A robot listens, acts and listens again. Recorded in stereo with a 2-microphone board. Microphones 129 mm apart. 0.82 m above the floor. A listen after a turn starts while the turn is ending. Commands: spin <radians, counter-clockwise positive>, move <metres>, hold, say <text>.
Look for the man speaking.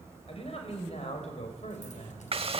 spin 1.05
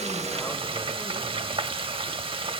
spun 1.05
hold
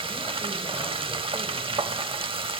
hold
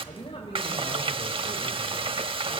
spin 0.70
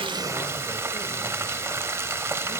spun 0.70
hold
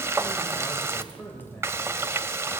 spin 0.17
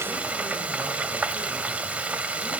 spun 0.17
hold
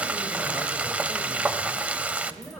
say Facing the man speaking.